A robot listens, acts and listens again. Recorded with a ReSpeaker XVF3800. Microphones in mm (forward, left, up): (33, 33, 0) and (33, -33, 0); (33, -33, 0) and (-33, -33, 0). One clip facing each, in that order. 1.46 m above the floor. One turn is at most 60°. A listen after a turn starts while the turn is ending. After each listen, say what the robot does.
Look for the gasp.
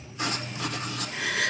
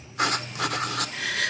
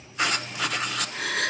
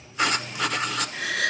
Turn 15° left.
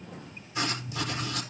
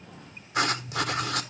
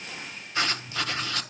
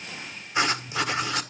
I heard a gasp from this way, but can't make it out now.